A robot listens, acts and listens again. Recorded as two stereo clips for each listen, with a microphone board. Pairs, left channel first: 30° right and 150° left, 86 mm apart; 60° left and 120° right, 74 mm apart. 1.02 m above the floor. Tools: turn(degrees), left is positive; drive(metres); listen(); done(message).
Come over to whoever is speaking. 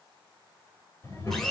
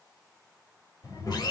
turn(degrees=25)
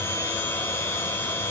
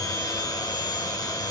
listen()
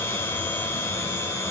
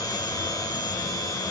listen()
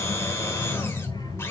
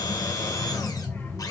drive(metres=1.0)
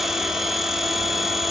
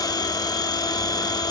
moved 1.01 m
listen()
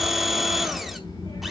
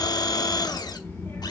drive(metres=1.0)
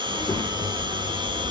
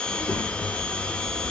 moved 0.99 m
drive(metres=1.0)
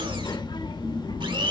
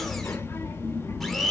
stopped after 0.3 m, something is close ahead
done("Arrived at the child speaking, straight ahead.")